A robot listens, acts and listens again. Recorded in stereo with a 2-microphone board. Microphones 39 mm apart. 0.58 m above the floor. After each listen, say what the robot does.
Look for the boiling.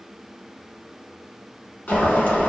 Turn 55° left.
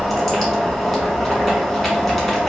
Facing the boiling.